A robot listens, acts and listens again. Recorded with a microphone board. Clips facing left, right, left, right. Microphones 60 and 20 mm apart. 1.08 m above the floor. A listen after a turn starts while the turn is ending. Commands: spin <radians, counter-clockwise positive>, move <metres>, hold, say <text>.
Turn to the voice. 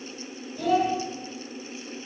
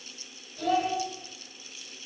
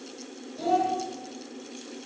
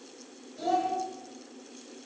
spin 0.52
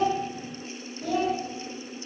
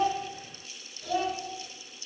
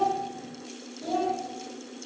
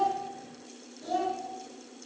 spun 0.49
spin 2.62
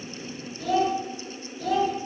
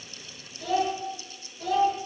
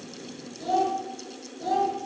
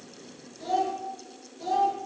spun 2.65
say Facing the child speaking.